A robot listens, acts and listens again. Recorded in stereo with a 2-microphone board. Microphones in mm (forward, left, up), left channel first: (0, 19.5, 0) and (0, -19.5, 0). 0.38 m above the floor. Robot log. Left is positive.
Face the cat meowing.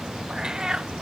note: The cat meowing: about 15° right or 165° right.
cmd yaw -15
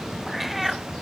end: Found it: a cat meowing, straight ahead.